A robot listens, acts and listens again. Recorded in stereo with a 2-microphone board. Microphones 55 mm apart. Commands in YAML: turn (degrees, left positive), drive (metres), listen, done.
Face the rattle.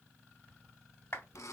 listen: true
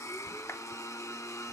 listen: true
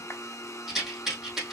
turn: -30
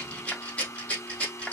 turn: 25
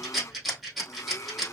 done: "Facing the rattle."